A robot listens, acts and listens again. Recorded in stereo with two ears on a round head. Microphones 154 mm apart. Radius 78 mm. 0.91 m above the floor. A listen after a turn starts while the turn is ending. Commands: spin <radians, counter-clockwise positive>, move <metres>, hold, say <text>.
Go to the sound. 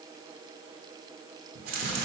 spin -0.96
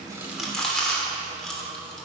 move 1.0
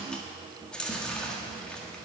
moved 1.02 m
move 1.0
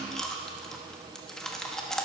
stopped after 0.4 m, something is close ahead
say Arrived at the chewing, straight ahead.